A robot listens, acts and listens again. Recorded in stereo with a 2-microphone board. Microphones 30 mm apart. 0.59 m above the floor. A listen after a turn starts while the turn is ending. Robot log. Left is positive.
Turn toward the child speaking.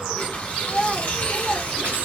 cmd yaw -30
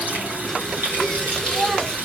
note: So it is at 140° right.
cmd yaw -140
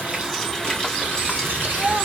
note: The child speaking is now 45° right.
cmd yaw -45
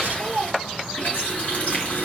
note: The child speaking is now 15° right.
cmd yaw -15
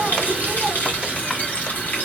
cmd idle
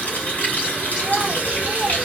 cmd idle
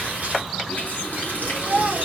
end: Found it: a child speaking, straight ahead, 1 to 2 m away.